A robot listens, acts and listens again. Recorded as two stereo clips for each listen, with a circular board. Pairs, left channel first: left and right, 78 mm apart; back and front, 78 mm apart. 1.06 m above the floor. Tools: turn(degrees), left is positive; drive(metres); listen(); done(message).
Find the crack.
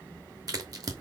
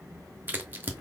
turn(degrees=-60)
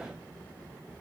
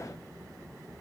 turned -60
done("Facing where the crack came from. I can't hear it now.")